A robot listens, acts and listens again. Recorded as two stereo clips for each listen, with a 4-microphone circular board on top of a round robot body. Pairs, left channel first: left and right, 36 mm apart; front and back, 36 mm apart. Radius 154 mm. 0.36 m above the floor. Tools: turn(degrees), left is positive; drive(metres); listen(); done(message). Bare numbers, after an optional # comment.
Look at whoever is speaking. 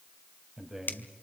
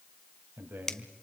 # The man speaking: 170° right.
turn(-170)
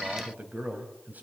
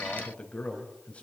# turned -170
# The man speaking is now 55° right.
turn(-55)
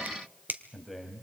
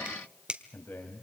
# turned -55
done("Facing the man speaking, 2 to 4 m away.")